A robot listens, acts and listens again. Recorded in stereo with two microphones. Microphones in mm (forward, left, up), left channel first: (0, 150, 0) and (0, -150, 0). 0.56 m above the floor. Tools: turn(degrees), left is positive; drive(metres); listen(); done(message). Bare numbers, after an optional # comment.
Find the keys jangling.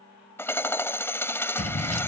# The keys jangling: about 60° left or 120° left.
turn(60)
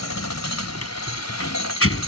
# So it is at 45° left.
turn(45)
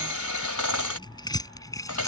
# The keys jangling is now 10° left.
turn(10)
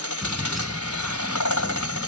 done("Found it: keys jangling, straight ahead.")